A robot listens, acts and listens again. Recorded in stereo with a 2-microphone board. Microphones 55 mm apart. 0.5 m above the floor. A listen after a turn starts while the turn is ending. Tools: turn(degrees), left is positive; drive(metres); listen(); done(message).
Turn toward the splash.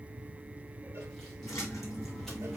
turn(degrees=65)
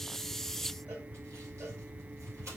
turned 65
listen()
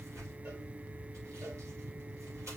done("I heard a splash, but can't make it out now. It was about straight ahead or 50° left.")